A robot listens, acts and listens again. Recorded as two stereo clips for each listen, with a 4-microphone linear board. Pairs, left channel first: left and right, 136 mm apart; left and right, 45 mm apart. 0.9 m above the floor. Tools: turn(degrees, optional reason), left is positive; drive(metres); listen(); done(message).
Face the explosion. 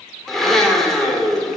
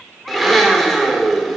listen()
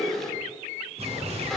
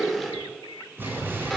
turn(degrees=-50, reason="The explosion: about 50° right or 130° right.")
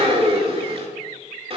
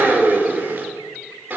listen()
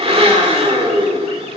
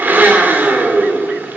done("I heard an explosion, but can't make it out now. It was about straight ahead or 80° right.")